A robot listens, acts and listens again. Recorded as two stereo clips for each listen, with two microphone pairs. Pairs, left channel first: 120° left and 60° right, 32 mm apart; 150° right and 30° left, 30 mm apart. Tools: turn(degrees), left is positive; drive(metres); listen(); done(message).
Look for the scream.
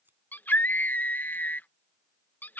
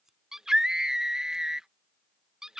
turn(degrees=100)
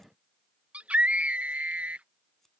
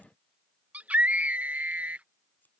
turn(degrees=-10)
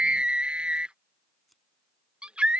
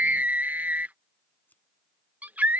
done("Found it: a scream, straight ahead.")